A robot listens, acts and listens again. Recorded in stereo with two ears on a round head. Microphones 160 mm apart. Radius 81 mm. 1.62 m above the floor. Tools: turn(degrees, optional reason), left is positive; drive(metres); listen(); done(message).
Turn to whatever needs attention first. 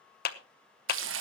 listen()
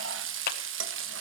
listen()
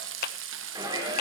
turn(degrees=-20, reason="The shout: about 20° right or 160° right.")
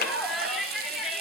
done("Found it: a shout, straight ahead.")